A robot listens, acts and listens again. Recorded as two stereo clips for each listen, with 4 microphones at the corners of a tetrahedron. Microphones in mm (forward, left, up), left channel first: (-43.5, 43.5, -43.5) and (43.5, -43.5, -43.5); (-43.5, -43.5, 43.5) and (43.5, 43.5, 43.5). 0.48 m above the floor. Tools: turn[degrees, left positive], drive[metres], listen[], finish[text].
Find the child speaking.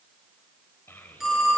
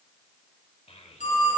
Thought: The child speaking: 155° right.
Action: turn[-155]
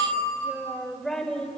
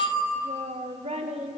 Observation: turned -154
Thought: The child speaking is now 60° left.
Action: turn[60]
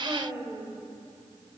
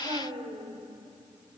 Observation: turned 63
Thought: The child speaking is now 20° left.
Action: turn[20]
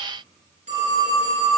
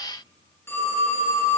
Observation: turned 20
Action: listen[]
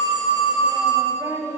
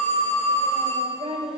Thought: The child speaking is now 15° left.
Action: turn[15]
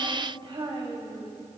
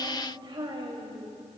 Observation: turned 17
Action: finish[Facing the child speaking.]